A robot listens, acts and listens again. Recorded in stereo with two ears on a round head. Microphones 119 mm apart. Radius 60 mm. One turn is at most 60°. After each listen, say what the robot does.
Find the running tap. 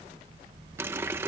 Turn 20° right.
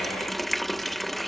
Found it: a running tap, straight ahead.